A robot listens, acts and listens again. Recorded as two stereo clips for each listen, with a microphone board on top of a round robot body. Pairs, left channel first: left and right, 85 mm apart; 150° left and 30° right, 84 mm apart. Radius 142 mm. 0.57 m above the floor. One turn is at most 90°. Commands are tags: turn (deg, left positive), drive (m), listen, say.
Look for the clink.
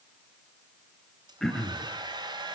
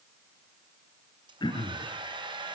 <listen/>
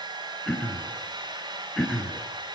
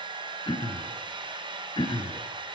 <listen/>
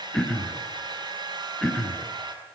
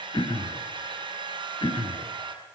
<say>I can't make out a clink, only a hair dryer and throat clearing.</say>